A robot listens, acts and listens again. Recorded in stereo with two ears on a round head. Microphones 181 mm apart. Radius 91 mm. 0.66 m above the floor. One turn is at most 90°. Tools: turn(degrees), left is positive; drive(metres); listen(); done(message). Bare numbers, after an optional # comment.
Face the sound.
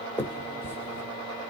turn(30)
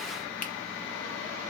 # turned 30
listen()
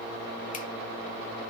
listen()
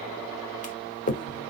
# So it is at 135° left.
turn(90)
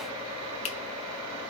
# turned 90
# The finger snap is now 35° left.
turn(35)
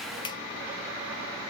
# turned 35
listen()
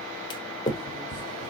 # The finger snap is now 25° left.
turn(25)
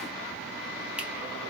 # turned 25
listen()
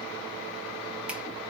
listen()
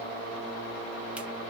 done("I heard a finger snap from this way, but can't make it out now.")